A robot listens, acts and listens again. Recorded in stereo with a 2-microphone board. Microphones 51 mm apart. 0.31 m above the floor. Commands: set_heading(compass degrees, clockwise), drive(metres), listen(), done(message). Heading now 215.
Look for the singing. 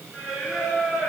set_heading(245)
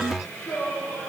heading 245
set_heading(225)
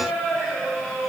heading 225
done("Facing the singing, 2 to 4 m away.")